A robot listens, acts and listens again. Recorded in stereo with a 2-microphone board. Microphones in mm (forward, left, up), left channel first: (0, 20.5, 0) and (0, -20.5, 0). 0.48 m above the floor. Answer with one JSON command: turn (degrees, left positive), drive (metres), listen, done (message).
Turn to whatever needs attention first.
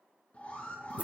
{"turn": 40}
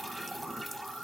{"done": "Facing the alarm."}